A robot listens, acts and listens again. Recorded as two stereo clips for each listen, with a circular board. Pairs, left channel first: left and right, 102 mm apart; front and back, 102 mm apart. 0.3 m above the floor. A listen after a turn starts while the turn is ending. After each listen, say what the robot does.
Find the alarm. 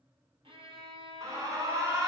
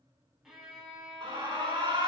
Turn 140° right.
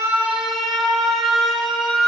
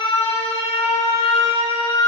Facing the alarm.